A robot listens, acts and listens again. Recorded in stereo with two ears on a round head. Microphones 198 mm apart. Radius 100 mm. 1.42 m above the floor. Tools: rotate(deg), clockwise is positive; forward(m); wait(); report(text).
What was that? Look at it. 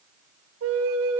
rotate(65)
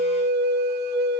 rotate(45)
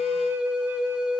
report("Found it: a flute, straight ahead, under 1 m away.")